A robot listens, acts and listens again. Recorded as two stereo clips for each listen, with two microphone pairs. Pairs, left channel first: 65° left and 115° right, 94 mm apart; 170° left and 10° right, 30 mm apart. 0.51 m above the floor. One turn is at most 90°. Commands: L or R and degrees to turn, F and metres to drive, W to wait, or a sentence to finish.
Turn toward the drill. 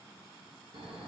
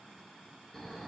W
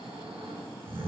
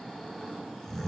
W
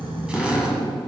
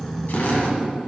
L90
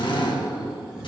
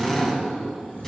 L90
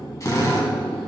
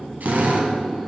L10
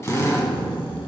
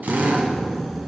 Facing the drill.